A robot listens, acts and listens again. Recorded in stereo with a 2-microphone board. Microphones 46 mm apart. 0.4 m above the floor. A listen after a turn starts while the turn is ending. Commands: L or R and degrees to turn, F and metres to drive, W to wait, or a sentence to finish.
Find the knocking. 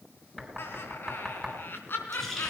L30
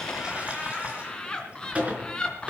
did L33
W
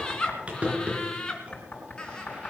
L140
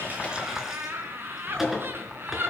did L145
W
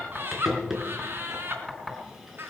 Facing the knocking.